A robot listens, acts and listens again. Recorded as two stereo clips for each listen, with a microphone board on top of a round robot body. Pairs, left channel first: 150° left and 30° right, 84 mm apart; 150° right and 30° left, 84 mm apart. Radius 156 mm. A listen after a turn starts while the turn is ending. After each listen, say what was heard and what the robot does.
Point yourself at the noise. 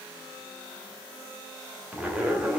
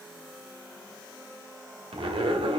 The zipper: 50° left. Turn 50° left.
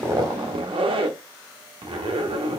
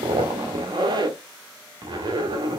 The zipper is now 10° right. Turn 10° right.
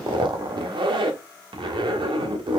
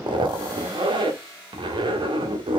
Facing the zipper, under 1 m away.